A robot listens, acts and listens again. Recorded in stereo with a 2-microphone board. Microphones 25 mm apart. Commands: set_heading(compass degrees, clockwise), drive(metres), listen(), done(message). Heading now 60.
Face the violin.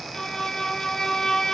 set_heading(40)
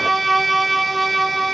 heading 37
done("Found it: a violin, straight ahead.")